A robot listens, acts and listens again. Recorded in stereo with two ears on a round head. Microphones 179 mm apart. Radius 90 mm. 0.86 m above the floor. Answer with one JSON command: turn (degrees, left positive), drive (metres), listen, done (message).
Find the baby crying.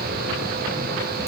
{"listen": true}
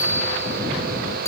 {"listen": true}
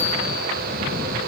{"done": "I can't make out a baby crying to turn to."}